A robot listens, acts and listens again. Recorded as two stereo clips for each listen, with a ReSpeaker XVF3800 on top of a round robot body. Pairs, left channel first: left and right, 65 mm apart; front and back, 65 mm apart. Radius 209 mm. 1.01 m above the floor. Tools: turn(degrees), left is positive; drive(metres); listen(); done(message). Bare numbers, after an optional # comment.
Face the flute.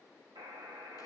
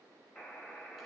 listen()
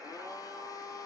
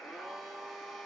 listen()
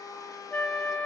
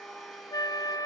# The flute: 15° left.
turn(15)
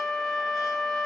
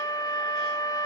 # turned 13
done("Facing the flute, 1 to 2 m away.")